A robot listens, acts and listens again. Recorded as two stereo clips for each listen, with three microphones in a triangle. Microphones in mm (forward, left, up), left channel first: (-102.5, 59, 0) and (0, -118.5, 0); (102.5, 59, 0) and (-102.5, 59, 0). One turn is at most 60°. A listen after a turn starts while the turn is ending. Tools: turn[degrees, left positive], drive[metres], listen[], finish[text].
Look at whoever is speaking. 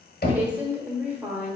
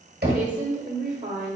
Thought: The woman speaking: 140° right.
Action: turn[-60]
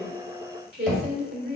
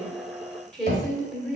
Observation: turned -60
Thought: The woman speaking is now 85° right.
Action: turn[-60]
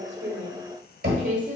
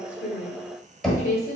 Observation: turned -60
Thought: The woman speaking is now 25° right.
Action: turn[-25]
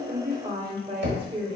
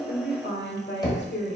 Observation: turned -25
Action: finish[Found it: a woman speaking, straight ahead, 1 to 2 m away.]